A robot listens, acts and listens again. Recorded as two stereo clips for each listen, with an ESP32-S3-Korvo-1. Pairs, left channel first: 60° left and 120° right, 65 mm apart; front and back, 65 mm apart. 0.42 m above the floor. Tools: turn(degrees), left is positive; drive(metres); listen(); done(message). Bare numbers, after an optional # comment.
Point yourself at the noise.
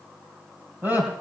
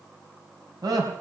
# The laughter: straight behind.
turn(180)
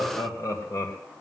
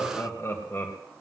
# The laughter is now 40° left.
turn(40)
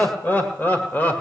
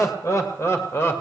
# The laughter is now 15° left.
turn(15)
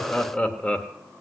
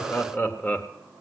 # The laughter is now 15° left.
turn(15)
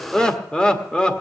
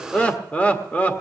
# The laughter is now 10° left.
turn(10)
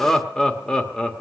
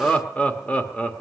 done("Facing the laughter.")